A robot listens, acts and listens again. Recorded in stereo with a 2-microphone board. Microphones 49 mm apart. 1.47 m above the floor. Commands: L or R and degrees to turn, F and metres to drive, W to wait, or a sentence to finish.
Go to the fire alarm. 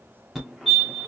R30
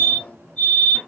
L20
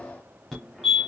F1.0
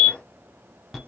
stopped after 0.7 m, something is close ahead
Arrived at the fire alarm, straight ahead.